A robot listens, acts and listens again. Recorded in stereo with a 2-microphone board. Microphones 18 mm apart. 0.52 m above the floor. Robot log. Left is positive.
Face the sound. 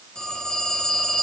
note: The phone ringing: about 60° left or 120° left.
cmd yaw +60
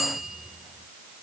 end: Facing the phone ringing, over 4 m away.